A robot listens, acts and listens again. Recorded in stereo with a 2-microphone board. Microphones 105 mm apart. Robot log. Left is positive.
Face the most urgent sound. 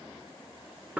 cmd idle
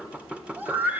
note: The scream: about 15° right or 165° right.
cmd yaw -15
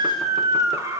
note: So it is at 150° right.
cmd yaw -150
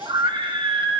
note: The scream is now 50° right.
cmd yaw -50
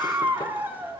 note: The scream is now 20° right.
cmd yaw -20
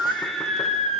end: Found it: a scream, straight ahead.